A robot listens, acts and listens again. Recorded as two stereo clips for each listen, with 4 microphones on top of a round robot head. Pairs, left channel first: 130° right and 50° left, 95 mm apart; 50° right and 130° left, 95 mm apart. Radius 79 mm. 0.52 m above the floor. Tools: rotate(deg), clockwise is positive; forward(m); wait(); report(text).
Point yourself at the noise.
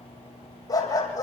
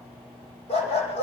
rotate(70)
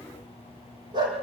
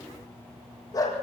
report("Found it: a dog barking, straight ahead.")